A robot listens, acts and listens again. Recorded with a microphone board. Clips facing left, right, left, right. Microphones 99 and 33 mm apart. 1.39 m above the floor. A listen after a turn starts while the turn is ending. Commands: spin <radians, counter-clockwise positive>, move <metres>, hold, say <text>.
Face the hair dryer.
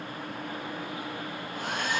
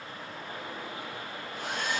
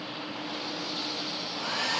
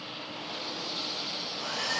spin 0.96
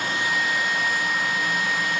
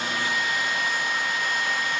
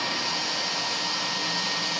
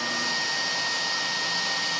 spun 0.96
say Facing the hair dryer.